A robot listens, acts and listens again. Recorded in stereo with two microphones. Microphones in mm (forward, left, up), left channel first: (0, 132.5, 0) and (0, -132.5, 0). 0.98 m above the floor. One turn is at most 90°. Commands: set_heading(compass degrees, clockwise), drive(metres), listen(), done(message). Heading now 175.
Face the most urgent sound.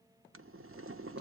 listen()
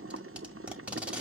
listen()
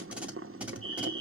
set_heading(140)
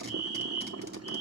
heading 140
done("Found it: a fire alarm, straight ahead.")